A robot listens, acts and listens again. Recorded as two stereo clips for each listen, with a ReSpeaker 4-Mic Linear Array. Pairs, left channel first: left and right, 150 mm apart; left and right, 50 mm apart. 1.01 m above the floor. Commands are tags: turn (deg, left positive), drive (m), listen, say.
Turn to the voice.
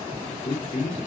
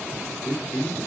<turn deg="55"/>
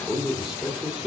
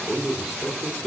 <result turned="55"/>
<say>Found it: a man speaking, straight ahead.</say>